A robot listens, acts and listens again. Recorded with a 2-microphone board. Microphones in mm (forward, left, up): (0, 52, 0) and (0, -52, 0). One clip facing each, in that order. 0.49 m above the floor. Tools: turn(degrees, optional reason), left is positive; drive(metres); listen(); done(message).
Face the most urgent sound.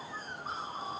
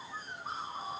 listen()
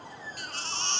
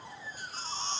turn(degrees=90)
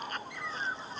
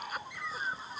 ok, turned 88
listen()
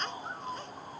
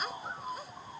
done("Facing the baby crying.")